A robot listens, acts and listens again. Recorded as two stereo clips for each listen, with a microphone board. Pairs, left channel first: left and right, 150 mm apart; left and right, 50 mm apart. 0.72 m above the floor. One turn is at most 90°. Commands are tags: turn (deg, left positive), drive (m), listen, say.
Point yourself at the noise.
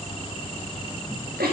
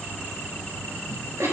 <turn deg="-90"/>
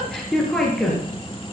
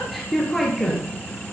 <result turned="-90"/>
<say>Found it: a giggle, straight ahead.</say>